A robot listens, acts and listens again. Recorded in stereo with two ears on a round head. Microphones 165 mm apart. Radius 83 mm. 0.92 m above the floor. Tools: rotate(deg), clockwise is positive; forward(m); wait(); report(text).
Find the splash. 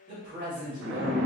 rotate(70)
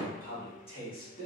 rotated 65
wait()
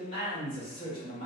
report("I heard a splash, but can't make it out now. It was about 5° right or 45° right.")